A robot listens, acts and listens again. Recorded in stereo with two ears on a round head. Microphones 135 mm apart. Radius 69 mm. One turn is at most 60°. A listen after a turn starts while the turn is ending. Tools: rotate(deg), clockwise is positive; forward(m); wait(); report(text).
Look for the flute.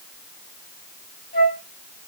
rotate(-55)
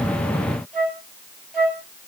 report("Found it: a flute, straight ahead, over 4 m away.")